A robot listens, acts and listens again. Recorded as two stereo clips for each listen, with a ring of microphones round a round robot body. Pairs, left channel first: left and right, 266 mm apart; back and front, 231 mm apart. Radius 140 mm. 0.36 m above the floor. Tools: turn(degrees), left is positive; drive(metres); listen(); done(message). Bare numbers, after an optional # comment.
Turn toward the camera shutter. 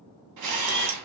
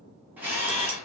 # The camera shutter: 85° right.
turn(-85)
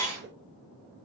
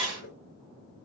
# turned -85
# The camera shutter is now 10° left.
turn(10)
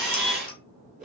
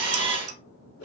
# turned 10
done("Found it: a camera shutter, straight ahead, 2 to 4 m away.")